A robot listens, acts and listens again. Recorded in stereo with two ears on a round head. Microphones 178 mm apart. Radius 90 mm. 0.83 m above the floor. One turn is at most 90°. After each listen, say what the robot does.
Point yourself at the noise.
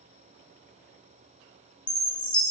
Turn 20° left.
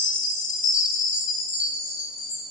Turn 90° left.
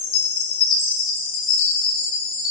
Turn 85° left.
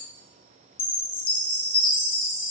Turn 25° left.
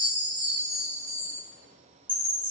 Turn 10° right.
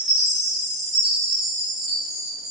Found it: a chime, straight ahead, under 1 m away.